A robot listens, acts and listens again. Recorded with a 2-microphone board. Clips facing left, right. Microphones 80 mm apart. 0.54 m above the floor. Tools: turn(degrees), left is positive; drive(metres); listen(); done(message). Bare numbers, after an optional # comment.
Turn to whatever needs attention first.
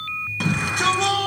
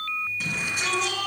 # The shout: about 70° left or 110° left.
turn(70)
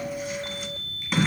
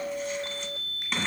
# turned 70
done("Found it: a shout, straight ahead.")